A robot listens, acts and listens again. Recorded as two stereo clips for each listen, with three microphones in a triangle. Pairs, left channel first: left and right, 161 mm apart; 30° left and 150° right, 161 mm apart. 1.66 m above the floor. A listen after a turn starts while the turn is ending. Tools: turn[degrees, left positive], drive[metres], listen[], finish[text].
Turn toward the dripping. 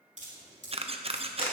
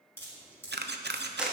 Thought: The dripping: 45° right.
Action: turn[-45]
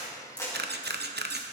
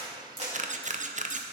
Action: listen[]
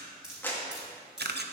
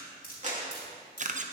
Action: finish[Found it: dripping, straight ahead.]